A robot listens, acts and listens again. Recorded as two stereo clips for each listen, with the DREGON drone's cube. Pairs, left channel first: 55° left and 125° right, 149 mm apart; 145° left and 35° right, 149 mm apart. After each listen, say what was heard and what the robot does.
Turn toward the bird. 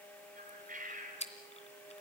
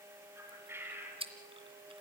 The bird: 105° right. Turn 105° right.
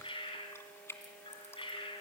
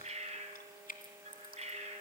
Facing the bird.